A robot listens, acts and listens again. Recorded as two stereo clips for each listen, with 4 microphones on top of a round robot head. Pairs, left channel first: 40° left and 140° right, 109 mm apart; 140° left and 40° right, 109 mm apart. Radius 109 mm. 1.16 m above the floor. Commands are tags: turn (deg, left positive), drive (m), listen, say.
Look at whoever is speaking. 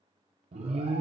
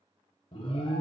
<listen/>
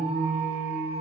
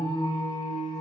<listen/>
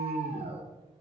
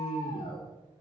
<say>I can't make out anyone speaking, only an alarm.</say>